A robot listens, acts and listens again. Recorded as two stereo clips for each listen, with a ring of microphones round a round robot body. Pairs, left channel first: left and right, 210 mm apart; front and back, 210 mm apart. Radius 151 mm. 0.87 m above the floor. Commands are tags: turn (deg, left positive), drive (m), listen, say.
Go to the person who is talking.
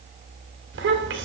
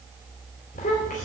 <turn deg="-65"/>
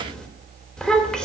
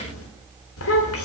<drive m="1.0"/>
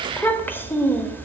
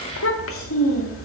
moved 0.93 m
<turn deg="10"/>
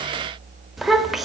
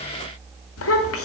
<drive m="1.0"/>
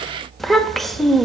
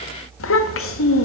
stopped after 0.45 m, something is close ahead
<say>I am next to the child speaking.</say>